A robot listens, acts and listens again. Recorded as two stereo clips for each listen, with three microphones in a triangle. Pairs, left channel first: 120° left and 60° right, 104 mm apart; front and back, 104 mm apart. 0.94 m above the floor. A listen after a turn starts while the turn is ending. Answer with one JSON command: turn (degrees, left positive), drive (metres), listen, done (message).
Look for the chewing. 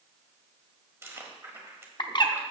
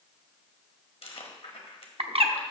{"done": "Facing the chewing."}